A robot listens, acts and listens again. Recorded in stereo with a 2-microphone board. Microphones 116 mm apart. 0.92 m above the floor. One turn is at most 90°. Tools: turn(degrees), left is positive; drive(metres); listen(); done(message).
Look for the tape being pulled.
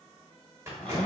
turn(degrees=-20)
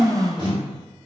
turn(degrees=-90)
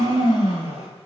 turn(degrees=-50)
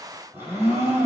listen()
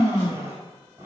done("I heard tape being pulled from this way, but can't make it out now.")